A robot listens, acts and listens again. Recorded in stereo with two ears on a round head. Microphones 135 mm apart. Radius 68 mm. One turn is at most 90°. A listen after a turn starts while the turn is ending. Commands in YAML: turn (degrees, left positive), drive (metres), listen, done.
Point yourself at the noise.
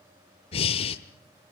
turn: 40
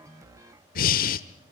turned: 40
turn: 90
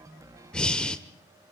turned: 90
done: "Found it: breathing, straight ahead, 1 to 2 m away."